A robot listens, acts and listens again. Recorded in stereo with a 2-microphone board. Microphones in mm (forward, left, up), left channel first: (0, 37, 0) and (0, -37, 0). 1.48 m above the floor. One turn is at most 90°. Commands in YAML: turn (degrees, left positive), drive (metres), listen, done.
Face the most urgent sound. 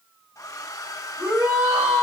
turn: -25
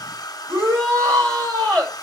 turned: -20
turn: -90
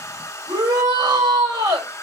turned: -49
turn: -90
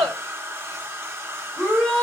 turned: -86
done: "Facing the shout."